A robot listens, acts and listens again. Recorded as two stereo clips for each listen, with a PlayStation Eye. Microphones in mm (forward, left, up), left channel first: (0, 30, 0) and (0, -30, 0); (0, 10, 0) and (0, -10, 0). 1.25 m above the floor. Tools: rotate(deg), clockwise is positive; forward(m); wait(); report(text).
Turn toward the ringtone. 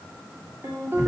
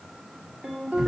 rotate(50)
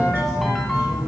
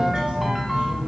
report("Found it: a ringtone, straight ahead, 2 to 4 m away.")